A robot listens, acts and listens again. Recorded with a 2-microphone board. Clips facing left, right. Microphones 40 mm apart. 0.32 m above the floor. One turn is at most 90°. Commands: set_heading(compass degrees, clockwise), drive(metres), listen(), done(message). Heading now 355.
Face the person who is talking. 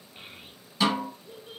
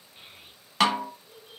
set_heading(320)
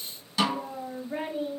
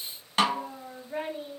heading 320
set_heading(310)
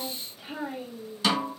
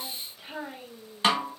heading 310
done("Found it: a child speaking, straight ahead, 1 to 2 m away.")